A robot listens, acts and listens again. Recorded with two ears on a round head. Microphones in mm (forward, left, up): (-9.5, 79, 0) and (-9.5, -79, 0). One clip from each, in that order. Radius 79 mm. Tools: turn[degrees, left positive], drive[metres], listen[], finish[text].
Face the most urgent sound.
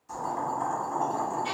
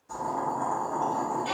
Action: listen[]
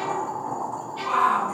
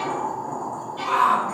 Thought: The shout: about 40° right or 140° right.
Action: turn[-40]
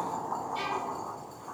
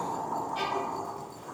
Action: listen[]
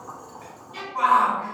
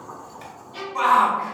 Thought: So it is at 100° right.
Action: turn[-100]
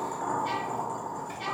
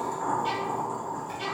Action: listen[]
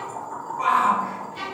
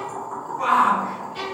Action: finish[Found it: a shout, straight ahead.]